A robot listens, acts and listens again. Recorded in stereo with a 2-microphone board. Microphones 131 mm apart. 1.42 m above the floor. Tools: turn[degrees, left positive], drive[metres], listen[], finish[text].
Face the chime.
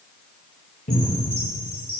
Thought: The chime: about 15° right or 165° right.
Action: turn[-15]
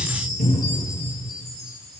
Action: finish[Found it: a chime, straight ahead.]